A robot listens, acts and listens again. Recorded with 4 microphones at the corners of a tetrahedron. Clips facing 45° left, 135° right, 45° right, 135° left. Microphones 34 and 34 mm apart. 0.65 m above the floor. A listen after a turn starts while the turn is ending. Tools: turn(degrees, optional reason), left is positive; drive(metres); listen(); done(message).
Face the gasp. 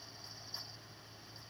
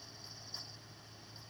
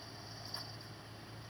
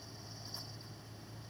listen()
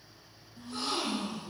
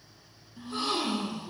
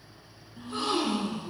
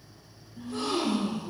turn(degrees=-80, reason="The gasp: 80° right.")
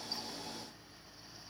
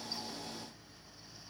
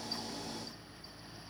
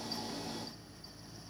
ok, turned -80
done("Facing where the gasp came from. I can't hear it now.")